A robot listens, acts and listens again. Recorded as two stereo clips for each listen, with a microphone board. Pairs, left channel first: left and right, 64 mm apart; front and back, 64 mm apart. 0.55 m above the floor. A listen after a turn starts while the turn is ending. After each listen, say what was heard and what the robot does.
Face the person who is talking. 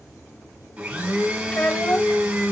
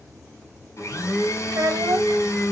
The child speaking: 160° left. Turn 160° left.
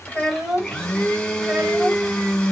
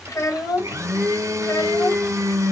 The child speaking is now 15° right. Turn 15° right.
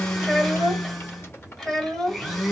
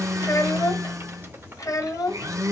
Facing the child speaking.